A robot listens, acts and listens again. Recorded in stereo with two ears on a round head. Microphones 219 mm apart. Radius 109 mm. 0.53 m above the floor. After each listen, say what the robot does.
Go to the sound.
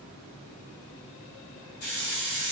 Turn 65° left.
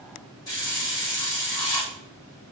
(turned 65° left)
Turn 20° left.
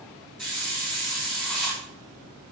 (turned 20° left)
Drive 1.0 m forward.
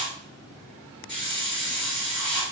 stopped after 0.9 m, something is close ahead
Arrived at the hiss, straight ahead.